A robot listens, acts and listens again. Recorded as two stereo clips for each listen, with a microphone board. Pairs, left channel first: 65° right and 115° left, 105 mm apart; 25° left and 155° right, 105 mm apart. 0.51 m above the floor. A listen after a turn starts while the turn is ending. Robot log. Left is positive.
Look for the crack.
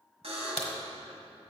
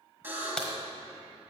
note: The crack: 60° right.
cmd yaw -60
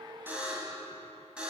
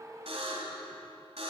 end: I heard a crack from this way, but can't make it out now.